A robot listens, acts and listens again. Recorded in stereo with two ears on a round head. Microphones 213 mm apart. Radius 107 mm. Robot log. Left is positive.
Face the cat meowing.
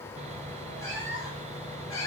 note: The cat meowing: about 15° left or 165° left.
cmd yaw +15
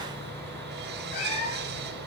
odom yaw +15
note: The cat meowing: about 35° left or 145° left.
cmd yaw +35
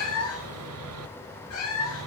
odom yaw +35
note: So it is at 105° left.
cmd yaw +105
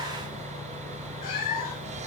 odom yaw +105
note: The cat meowing is now 40° left.
cmd yaw +40
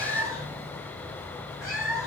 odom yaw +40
end: Facing the cat meowing.